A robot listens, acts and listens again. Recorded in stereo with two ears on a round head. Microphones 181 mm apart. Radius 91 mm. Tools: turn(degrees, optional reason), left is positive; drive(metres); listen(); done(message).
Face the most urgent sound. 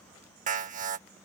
turn(degrees=-40, reason="The alarm: about 40° right or 140° right.")
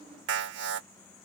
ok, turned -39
turn(degrees=-90, reason="So it is at 90° right.")
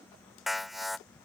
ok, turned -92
done("Facing the alarm.")